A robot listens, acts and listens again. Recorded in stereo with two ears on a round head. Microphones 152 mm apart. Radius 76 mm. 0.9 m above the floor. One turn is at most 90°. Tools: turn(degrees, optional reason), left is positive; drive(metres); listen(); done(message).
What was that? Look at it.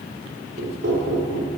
turn(degrees=-90)
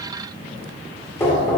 turn(degrees=15, reason="So it is at 15° left.")
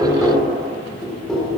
done("Found it: knocking, straight ahead.")